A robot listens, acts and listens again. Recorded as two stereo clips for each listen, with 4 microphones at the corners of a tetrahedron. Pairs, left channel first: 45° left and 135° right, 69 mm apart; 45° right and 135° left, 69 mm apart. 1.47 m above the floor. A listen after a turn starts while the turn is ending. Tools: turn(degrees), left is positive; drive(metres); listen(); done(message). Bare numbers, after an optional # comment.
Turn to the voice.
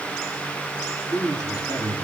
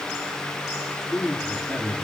# The man speaking: 35° left.
turn(35)
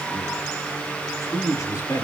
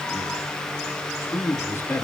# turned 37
# The man speaking is now 10° left.
turn(10)
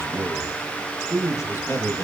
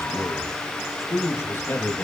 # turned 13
# The man speaking is now 10° left.
turn(10)
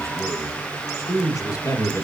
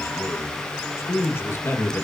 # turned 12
# The man speaking is now 10° left.
turn(10)
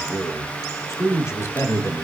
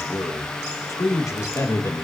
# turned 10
done("Facing the man speaking, 1 to 2 m away.")